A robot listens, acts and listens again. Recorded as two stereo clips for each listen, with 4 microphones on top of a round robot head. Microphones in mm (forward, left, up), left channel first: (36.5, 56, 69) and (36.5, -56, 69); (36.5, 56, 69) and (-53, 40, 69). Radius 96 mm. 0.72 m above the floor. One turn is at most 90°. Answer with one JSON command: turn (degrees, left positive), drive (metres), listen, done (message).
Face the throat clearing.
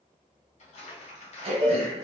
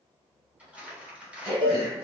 {"turn": -60}
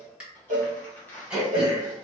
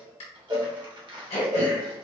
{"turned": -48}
{"turn": -10}
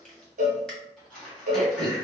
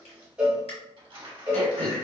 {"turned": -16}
{"done": "Facing the throat clearing, 1 to 2 m away."}